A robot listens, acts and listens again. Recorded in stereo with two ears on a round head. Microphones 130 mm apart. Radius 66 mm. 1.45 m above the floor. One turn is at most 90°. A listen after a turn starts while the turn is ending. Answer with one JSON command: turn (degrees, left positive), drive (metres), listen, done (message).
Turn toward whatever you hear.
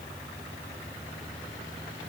{"listen": true}
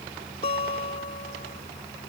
{"turn": 45}
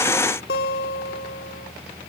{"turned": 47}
{"turn": 85}
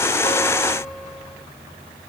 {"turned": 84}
{"listen": true}
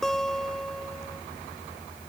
{"done": "Facing the guitar."}